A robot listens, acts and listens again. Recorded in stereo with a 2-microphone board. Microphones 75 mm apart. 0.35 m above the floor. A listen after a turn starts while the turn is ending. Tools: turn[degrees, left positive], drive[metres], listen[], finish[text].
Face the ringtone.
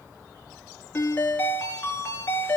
Thought: The ringtone: about 25° left or 155° left.
Action: turn[25]
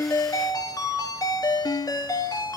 Thought: So it is at 130° left.
Action: turn[130]
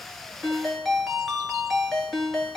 Action: finish[Facing the ringtone, 2 to 4 m away.]